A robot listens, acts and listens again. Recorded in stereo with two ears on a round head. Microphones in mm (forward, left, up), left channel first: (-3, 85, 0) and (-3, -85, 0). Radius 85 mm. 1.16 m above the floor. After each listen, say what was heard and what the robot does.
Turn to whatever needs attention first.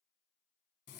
Keep listening.
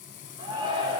The shout: about 25° right or 155° right. Turn 25° right.
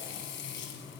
Keep listening.
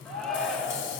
Found it: a shout, straight ahead.